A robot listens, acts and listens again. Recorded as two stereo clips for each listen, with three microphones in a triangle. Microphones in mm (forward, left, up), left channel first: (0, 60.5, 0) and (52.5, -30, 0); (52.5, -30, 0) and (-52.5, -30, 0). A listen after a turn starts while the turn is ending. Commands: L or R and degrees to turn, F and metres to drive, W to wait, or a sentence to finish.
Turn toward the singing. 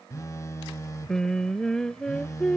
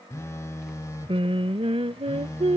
R155
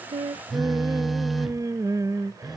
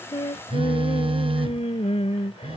Facing the singing.